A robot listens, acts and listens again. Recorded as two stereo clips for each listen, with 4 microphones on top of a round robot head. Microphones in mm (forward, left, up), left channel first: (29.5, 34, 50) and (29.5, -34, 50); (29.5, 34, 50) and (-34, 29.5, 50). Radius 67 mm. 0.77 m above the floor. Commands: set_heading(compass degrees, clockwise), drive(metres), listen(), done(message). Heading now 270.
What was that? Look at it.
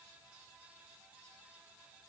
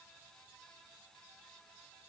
listen()
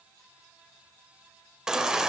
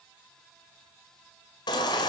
set_heading(280)
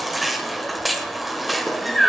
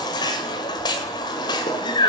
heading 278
done("Found it: a baby crying, straight ahead, 1 to 2 m away.")